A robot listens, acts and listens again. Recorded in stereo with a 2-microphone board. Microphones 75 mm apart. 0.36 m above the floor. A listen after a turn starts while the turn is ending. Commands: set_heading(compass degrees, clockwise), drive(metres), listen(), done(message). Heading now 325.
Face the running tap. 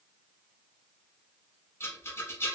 listen()
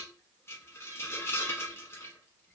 listen()
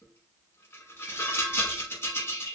done("I can't make out a running tap to turn to.")